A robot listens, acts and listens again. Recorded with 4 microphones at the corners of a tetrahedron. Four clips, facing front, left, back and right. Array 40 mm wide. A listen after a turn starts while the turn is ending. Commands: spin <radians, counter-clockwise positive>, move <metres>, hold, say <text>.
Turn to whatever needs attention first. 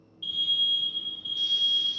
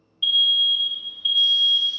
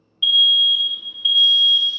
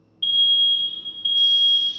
spin -3.05
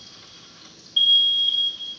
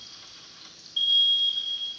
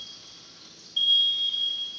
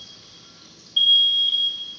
spin -0.70
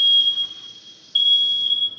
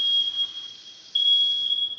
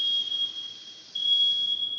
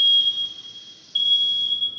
say Facing the alarm, under 1 m away.